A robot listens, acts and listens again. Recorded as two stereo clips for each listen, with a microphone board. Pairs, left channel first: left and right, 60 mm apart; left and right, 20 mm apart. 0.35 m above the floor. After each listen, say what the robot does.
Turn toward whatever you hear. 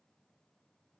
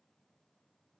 Keep listening.
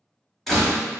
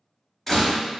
Turn 30° left.
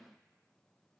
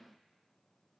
Keep listening.
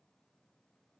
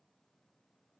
I heard a door slam, but can't make it out now. It was about 25° right or 145° left.